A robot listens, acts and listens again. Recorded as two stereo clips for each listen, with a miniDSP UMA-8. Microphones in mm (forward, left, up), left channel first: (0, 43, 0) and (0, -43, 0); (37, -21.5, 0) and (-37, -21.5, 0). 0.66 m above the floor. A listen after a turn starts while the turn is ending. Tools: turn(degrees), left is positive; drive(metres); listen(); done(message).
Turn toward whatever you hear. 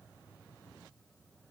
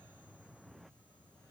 listen()
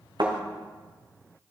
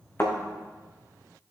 turn(degrees=-60)
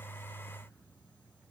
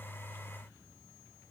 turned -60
done("Facing where the thud came from. I can't hear it now.")